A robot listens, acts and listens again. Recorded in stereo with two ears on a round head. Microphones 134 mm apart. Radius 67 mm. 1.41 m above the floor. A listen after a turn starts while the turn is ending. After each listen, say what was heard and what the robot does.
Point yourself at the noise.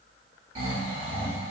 The snoring: about 50° right or 130° right. Turn 50° right.
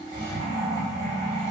So it is at 65° right. Turn 65° right.
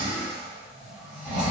The snoring is now 30° right. Turn 30° right.
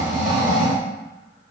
Facing the snoring, 1 to 2 m away.